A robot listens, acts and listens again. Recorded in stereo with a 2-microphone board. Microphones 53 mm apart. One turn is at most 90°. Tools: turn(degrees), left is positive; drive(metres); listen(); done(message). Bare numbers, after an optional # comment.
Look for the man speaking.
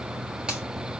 listen()
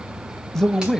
turn(30)
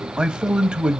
# So it is at 20° right.
turn(-20)
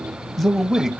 done("Facing the man speaking, under 1 m away.")